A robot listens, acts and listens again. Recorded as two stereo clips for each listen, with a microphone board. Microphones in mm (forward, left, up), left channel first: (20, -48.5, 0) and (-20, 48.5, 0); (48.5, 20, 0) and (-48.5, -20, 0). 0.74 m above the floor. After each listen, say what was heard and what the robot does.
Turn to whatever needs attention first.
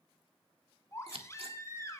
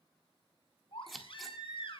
The baby crying: 10° right. Turn 10° right.
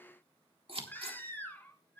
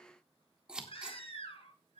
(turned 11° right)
Facing the baby crying, 2 to 4 m away.